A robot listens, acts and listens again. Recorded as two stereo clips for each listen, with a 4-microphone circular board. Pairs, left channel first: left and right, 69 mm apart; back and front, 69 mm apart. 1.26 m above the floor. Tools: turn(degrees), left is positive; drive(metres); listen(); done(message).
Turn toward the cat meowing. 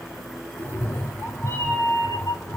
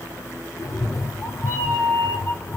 turn(degrees=125)
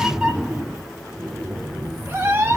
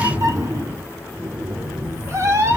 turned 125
turn(degrees=-40)
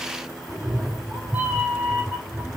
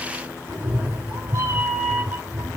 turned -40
turn(degrees=-15)
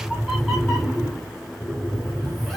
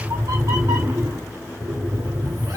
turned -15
done("Found it: a cat meowing, straight ahead, 1 to 2 m away.")